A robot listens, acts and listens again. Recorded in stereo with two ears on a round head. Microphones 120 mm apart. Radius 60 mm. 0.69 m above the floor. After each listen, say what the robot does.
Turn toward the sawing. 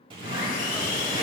Turn 65° left.
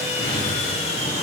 Turn 50° left.
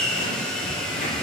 Facing the sawing, 1 to 2 m away.